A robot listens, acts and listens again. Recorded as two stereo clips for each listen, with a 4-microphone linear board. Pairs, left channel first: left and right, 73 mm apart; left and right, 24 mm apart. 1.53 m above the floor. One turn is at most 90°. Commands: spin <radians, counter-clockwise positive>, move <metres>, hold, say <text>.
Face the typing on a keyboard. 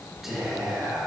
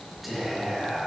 hold
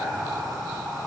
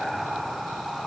hold
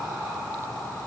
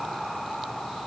say I can't make out typing on a keyboard to turn to.